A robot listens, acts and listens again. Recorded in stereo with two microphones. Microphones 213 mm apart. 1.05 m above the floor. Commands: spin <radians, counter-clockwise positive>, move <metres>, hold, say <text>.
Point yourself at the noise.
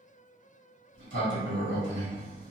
spin -1.05
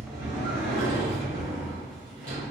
spin -0.79
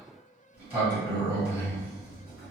spin -0.17
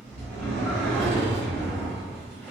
say Facing the sliding door, 1 to 2 m away.